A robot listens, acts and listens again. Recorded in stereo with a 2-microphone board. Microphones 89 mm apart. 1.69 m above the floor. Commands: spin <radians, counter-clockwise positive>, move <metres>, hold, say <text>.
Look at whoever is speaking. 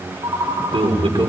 spin -1.57
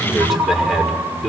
say Found it: a man speaking, straight ahead.